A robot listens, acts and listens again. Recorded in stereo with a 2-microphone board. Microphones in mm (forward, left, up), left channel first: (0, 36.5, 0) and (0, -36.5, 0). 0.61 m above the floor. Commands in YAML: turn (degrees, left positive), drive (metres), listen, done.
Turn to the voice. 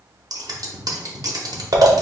listen: true
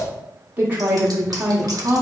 turn: -25
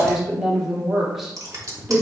done: "Facing the woman speaking, 1 to 2 m away."